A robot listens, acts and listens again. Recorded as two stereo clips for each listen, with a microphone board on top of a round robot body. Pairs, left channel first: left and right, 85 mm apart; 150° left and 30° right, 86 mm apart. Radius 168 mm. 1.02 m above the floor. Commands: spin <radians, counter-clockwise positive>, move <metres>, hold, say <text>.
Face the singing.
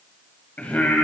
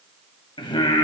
spin 2.88
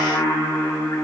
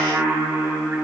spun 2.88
spin 0.70
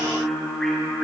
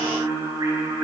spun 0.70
spin 0.17
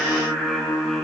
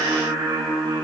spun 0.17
say Facing the singing, 2 to 4 m away.